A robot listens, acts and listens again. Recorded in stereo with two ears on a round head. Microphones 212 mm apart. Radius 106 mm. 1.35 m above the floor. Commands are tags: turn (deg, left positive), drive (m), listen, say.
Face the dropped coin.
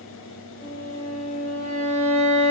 <listen/>
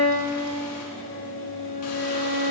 <listen/>
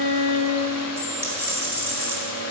<turn deg="-30"/>
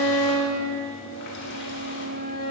<listen/>
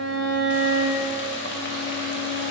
<say>I heard a dropped coin, but can't make it out now. It was about 20° left or 140° right.</say>